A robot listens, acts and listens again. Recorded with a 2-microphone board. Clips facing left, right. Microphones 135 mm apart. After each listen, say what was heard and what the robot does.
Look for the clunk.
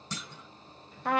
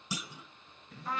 Turn 30° right.
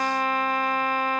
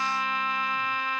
Keep listening.
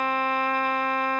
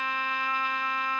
I heard a clunk, but can't make it out now. It was about 20° left or 140° right.